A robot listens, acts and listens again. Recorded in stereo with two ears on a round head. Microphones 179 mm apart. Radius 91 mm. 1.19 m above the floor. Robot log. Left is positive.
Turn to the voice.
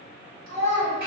note: The child speaking: about 50° right or 130° right.
cmd yaw -50
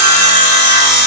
cmd idle
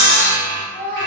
note: So it is at 10° right.
cmd yaw -10
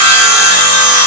cmd idle
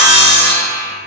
cmd idle
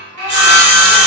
end: I heard a child speaking from this way, but can't make it out now.